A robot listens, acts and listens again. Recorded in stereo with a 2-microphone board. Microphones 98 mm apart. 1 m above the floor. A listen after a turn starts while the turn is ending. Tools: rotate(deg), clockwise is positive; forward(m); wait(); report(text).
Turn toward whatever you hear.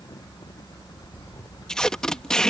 rotate(-30)
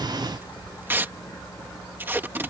rotate(20)
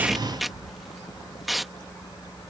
report("Found it: tape being pulled, straight ahead.")